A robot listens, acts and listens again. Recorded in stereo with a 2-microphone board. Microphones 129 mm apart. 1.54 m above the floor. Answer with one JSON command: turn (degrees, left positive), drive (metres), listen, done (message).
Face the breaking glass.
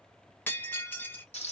{"turn": 15}
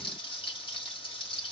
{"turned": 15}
{"listen": true}
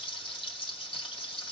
{"done": "I heard breaking glass, but can't make it out now. It was about straight ahead or 150° left."}